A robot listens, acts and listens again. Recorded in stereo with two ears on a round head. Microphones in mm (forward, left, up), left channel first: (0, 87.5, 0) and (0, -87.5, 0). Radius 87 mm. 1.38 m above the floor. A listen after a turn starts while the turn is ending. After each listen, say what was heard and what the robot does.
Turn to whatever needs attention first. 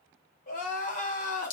The crying: about 40° left or 140° left. Turn 40° left.
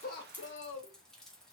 So it is at 100° left. Turn 100° left.
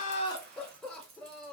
Found it: crying, straight ahead, under 1 m away.